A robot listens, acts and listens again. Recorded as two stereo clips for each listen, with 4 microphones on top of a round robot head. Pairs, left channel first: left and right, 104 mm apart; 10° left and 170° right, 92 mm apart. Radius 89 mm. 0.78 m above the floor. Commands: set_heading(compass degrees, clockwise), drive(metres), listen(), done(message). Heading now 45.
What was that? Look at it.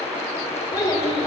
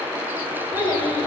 set_heading(0)
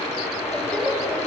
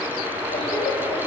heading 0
set_heading(350)
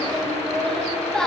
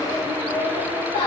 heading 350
set_heading(340)
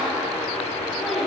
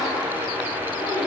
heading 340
listen()
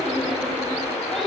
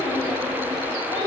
done("Found it: a child speaking, straight ahead.")